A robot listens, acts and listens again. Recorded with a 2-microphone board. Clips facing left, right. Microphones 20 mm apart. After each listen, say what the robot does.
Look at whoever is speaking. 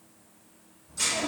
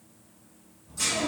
Turn 30° right.
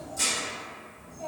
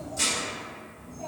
Found it: a child speaking, straight ahead.